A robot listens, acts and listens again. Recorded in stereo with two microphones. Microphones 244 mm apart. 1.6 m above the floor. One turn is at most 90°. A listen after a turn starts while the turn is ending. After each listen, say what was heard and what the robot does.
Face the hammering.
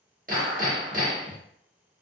The hammering: about 35° right or 145° right. Turn 35° right.
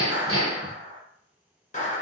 So it is at 110° right. Turn 90° right.
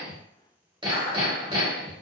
The hammering is now 20° right. Turn 20° right.
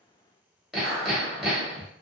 Found it: hammering, straight ahead, 1 to 2 m away.